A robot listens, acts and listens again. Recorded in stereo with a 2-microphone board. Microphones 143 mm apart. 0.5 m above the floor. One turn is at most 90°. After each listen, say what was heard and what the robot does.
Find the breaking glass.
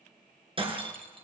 The breaking glass: about 40° right or 140° right. Turn 40° right.
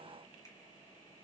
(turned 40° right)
Keep listening.
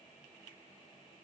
I heard breaking glass, but can't make it out now. It was about straight ahead or 100° right.